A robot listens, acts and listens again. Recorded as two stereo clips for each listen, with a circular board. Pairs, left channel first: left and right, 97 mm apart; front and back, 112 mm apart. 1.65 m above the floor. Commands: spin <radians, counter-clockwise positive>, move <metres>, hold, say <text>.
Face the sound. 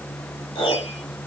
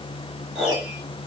spin 1.75
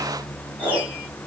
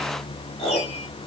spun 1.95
spin -0.26
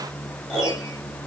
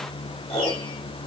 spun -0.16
say Found it: a piano, straight ahead.